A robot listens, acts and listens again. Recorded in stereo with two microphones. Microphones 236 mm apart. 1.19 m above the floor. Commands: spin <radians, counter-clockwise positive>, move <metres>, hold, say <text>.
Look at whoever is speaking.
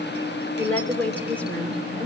spin 0.52
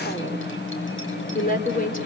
spin 2.44
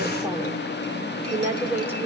spin -0.17
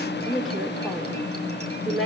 say Facing the woman speaking, 2 to 4 m away.